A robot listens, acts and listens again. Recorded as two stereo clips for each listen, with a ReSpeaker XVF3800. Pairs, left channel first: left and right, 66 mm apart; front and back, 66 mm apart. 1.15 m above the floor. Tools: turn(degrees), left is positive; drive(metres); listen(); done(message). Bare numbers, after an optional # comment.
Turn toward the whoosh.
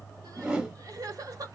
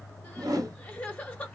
# The whoosh: 165° right.
turn(-165)
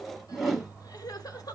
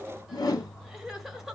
done("Found it: a whoosh, straight ahead, 1 to 2 m away.")